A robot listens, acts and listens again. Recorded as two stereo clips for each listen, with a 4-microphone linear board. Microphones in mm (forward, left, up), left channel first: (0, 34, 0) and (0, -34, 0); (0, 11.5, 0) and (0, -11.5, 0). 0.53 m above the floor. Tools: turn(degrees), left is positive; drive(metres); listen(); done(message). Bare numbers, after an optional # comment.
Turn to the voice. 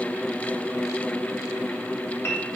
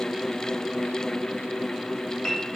listen()
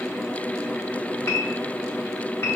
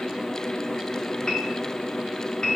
listen()
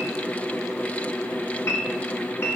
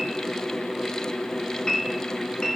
done("I can't make out anyone speaking to turn to.")